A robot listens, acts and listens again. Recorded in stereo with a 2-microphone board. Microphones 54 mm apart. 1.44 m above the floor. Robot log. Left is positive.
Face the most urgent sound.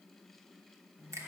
cmd idle
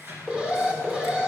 note: The alarm: about 15° right or 165° right.
cmd yaw -15
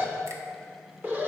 note: So it is at 150° right.
cmd yaw -150
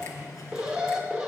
note: The alarm is now 15° right.
cmd yaw -15
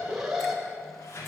end: Found it: an alarm, straight ahead.